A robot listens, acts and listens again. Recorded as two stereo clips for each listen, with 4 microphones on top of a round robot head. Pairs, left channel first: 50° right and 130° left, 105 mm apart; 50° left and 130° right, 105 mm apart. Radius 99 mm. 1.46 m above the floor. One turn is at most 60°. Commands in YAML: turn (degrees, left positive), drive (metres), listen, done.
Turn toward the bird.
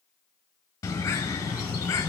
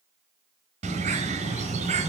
turn: -60
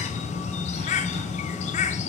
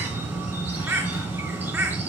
turn: -60
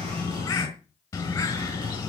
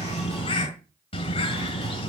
turn: 10
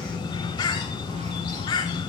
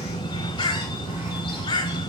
done: "Facing the bird, 2 to 4 m away."